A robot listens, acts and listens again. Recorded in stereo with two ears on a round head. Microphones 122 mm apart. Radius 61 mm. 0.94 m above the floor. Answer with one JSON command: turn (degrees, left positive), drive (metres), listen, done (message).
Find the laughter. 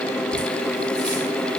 {"listen": true}
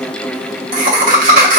{"turn": -65}
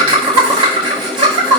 {"turn": -40}
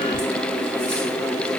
{"listen": true}
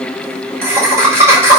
{"turn": -20}
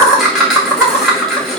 {"done": "Found it: laughter, straight ahead."}